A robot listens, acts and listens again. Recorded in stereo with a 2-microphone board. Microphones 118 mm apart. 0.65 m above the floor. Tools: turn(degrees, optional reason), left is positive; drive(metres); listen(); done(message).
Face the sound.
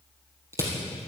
turn(degrees=-25, reason="The crushing: about 25° right or 155° right.")
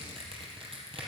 turn(degrees=-130, reason="So it is at 130° right.")
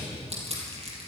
turn(degrees=-60, reason="The crushing is now 60° right.")
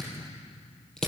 done("Found it: crushing, straight ahead.")